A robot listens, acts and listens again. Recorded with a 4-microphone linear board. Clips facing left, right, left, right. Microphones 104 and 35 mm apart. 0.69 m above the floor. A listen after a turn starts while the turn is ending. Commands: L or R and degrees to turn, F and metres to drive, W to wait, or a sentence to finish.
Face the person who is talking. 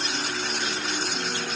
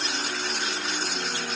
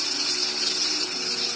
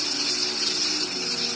W
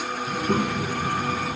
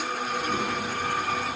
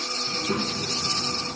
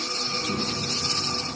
L65
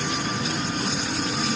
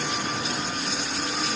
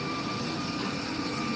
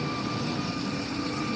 W
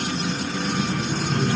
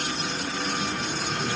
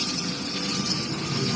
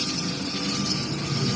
L50
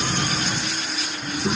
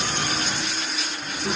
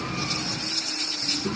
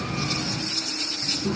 L15
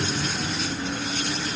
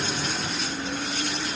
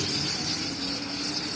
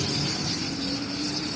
W
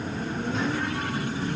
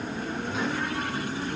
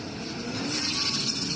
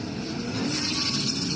Found it: a child speaking, straight ahead.